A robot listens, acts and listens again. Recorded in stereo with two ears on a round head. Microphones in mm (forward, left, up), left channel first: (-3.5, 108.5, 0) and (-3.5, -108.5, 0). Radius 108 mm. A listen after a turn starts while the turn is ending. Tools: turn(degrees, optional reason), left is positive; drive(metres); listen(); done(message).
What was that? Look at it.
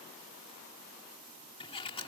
turn(degrees=25, reason="The sliding door: about 25° left or 155° left.")
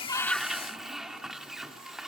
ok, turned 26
done("Found it: a sliding door, straight ahead.")